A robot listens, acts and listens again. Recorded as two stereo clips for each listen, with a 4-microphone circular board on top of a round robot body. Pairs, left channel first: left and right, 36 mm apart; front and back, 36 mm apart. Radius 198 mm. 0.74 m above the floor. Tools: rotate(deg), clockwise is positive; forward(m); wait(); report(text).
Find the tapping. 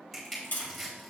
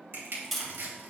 rotate(-90)
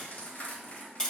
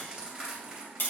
rotate(-20)
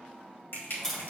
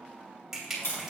rotate(-10)
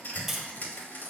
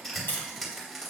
report("Facing the tapping, 2 to 4 m away.")